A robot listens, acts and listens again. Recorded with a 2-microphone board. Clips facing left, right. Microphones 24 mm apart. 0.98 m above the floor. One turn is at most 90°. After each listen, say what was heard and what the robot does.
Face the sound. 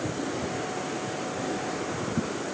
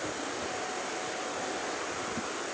Keep listening.
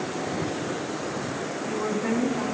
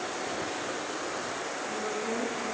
Turn 90° left.
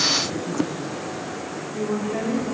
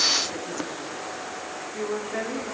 Facing the woman speaking.